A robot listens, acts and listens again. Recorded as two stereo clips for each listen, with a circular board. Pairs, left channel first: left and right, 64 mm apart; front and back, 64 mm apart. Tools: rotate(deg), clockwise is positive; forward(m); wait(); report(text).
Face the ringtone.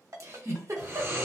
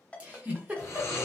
rotate(75)
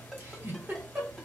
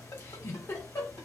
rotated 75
wait()
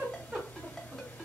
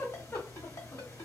wait()
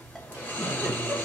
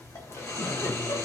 report("I heard a ringtone from this way, but can't make it out now.")